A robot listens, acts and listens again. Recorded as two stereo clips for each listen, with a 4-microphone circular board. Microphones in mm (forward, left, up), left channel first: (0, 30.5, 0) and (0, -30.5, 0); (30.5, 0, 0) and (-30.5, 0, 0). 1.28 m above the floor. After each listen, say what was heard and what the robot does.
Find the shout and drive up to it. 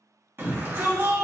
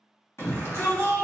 The shout: 40° right. Turn 40° right.
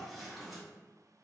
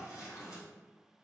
Keep listening.
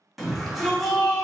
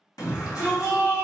Drive 1.0 m forward.
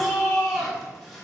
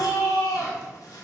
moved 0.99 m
Drive 1.0 m forward.
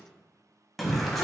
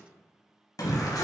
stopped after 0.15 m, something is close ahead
Arrived at the shout, straight ahead.